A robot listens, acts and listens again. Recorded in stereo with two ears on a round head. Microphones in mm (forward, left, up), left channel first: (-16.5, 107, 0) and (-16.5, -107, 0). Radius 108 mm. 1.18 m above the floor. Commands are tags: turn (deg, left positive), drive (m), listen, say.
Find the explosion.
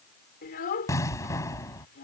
<turn deg="30"/>
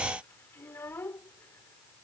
<listen/>
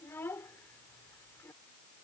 <say>I heard an explosion, but can't make it out now. It was about 15° right or 135° left.</say>